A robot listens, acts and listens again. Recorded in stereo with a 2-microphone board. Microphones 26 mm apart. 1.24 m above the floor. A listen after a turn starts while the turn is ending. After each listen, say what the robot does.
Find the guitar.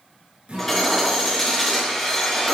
Turn 50° right.
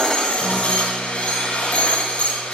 Keep listening.
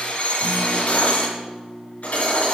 Turn 80° right.
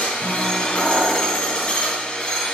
Keep listening.
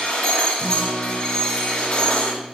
Facing the guitar, over 4 m away.